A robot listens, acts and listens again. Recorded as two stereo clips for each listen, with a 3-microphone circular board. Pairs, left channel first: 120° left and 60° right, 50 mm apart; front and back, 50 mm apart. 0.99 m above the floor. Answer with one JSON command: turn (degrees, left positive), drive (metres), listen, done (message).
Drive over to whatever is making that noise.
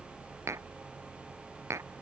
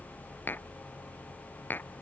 {"turn": -50}
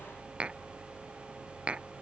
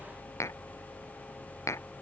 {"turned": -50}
{"turn": 10}
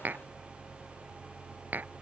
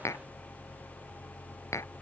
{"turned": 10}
{"drive": 1.0}
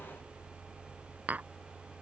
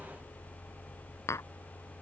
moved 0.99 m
{"drive": 1.0}
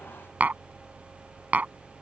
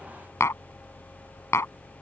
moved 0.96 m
{"drive": 1.0}
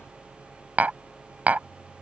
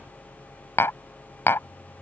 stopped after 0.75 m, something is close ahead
{"done": "Arrived at the tapping, straight ahead."}